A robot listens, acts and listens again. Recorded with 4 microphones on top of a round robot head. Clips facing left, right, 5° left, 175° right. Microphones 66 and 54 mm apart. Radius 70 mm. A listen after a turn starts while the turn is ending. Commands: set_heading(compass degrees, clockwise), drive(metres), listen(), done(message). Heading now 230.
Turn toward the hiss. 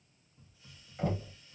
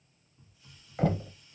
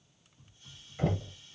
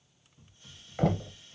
set_heading(75)
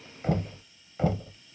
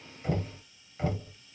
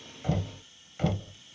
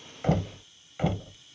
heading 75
set_heading(45)
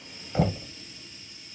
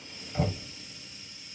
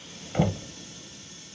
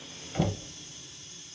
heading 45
done("Found it: a hiss, straight ahead.")